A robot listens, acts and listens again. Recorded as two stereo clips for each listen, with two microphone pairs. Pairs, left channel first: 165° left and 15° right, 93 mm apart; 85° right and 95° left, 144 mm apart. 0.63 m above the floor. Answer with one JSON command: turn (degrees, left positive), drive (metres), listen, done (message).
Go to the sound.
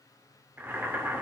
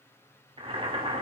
{"turn": 50}
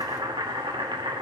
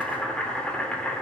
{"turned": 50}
{"drive": 1.0}
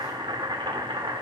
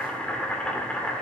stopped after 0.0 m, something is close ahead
{"done": "Blocked. The boiling is further on, straight ahead."}